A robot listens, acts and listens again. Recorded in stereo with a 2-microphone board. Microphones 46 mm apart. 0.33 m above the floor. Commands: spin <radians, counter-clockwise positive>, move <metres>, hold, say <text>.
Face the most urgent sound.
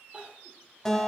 spin -0.44
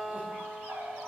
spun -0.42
hold
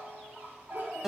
hold
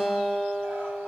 say I heard crying, but can't make it out now. It was about 5° right or 130° right.